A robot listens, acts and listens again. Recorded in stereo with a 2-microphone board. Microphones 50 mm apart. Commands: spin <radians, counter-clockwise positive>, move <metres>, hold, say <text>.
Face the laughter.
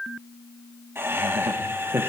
spin -0.87
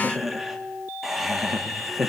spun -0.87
say Found it: laughter, straight ahead, 1 to 2 m away.